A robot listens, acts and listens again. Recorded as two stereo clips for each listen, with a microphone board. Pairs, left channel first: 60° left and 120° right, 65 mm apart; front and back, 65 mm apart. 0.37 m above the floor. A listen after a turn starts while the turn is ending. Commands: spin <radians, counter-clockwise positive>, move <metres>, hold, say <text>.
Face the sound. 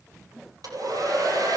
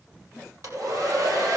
spin -2.53
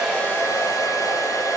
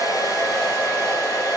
spin 0.44
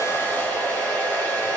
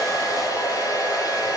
say Found it: a hair dryer, straight ahead, over 4 m away.